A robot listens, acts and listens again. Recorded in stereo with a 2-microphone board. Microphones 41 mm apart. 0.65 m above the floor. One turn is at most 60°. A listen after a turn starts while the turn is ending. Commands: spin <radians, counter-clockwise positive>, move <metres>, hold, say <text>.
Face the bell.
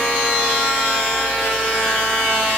hold
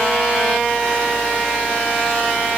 hold
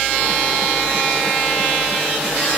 say I can't make out a bell.